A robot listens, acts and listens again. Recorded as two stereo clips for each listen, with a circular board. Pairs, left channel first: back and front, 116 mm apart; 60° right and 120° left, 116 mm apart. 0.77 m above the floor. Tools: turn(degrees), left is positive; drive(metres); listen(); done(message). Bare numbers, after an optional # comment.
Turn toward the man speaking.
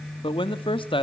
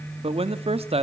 # The man speaking: 145° left.
turn(145)
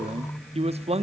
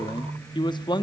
# The man speaking is now 15° right.
turn(-15)
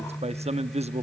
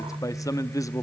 done("Facing the man speaking.")